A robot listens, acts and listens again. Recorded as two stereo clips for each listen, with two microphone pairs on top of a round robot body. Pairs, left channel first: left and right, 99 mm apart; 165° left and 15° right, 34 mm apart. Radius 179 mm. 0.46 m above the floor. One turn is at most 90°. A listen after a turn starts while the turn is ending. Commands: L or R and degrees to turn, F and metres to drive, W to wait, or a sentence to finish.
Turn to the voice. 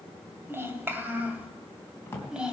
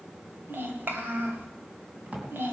Facing the child speaking.